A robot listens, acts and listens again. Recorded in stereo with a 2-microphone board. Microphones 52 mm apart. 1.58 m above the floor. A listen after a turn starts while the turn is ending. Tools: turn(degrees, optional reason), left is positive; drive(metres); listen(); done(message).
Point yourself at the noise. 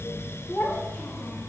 turn(degrees=35, reason="The child speaking: about 35° left or 145° left.")
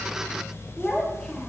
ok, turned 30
turn(degrees=10, reason="So it is at 10° left.")
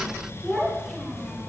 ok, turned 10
done("Found it: a child speaking, straight ahead, over 4 m away.")